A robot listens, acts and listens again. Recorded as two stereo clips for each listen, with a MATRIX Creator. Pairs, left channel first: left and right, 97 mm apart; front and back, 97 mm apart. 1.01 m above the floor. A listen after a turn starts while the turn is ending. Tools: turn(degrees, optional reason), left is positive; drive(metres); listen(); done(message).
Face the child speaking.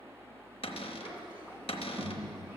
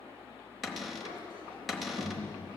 turn(degrees=-160, reason="The child speaking: 160° right.")
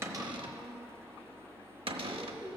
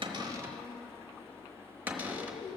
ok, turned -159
turn(degrees=25, reason="The child speaking is now 25° left.")
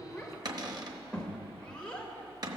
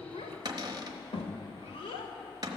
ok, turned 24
turn(degrees=10, reason="The child speaking is now 10° left.")
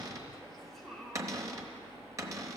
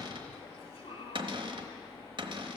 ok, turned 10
done("Facing the child speaking, 1 to 2 m away.")